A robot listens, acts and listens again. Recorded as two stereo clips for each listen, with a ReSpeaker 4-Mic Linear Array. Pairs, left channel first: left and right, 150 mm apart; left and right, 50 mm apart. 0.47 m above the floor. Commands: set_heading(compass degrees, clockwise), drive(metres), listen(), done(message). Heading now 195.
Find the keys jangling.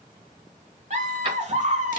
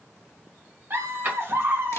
set_heading(230)
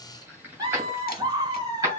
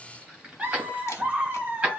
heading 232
set_heading(252)
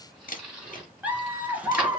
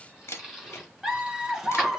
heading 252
listen()
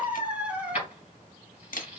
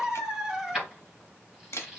set_heading(262)
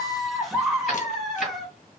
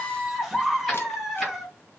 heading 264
listen()
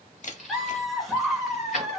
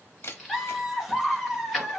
done("Found it: keys jangling, straight ahead, 2 to 4 m away.")